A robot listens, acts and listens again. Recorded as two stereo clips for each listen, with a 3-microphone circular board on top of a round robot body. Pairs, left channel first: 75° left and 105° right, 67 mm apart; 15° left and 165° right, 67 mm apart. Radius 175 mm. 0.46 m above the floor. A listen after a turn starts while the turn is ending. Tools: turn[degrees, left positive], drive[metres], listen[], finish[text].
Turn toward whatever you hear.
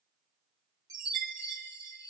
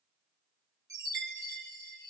Thought: The chime: 130° right.
Action: turn[-130]
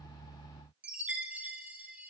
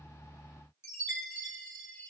Thought: The chime is now 35° right.
Action: turn[-35]
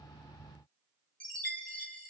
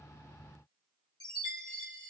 Action: finish[Facing the chime, 1 to 2 m away.]